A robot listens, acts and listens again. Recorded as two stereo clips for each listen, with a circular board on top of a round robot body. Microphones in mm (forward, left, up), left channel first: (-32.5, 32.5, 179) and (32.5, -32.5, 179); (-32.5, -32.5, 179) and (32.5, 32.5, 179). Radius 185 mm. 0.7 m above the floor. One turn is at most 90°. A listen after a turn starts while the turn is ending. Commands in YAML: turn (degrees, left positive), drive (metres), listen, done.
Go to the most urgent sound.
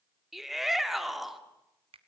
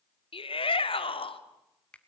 turn: -90
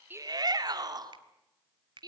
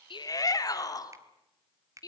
turn: -90
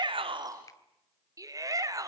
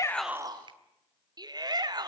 drive: 1.0
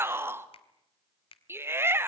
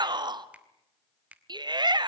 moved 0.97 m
turn: 15
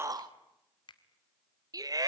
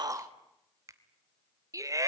drive: 1.0
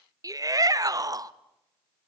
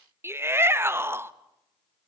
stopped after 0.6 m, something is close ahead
turn: -10
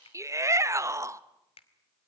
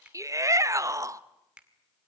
done: "Arrived at the shout, straight ahead."